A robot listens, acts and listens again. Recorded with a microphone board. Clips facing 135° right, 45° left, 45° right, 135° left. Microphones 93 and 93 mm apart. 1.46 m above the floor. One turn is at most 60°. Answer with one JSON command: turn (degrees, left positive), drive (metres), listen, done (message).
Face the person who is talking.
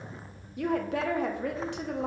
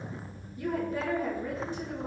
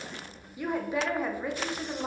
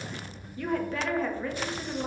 {"turn": -60}
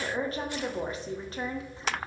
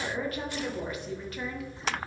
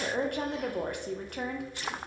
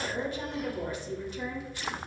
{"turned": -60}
{"turn": -60}
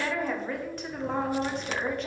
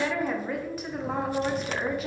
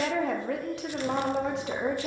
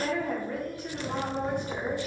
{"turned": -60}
{"turn": -40}
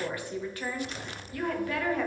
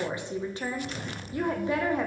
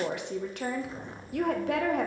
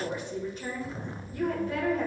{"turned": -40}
{"turn": -25}
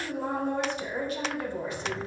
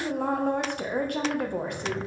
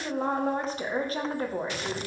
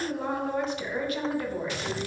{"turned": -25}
{"turn": 10}
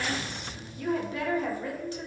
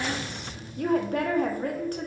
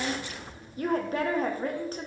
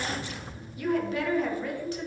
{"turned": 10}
{"done": "Found it: a woman speaking, straight ahead."}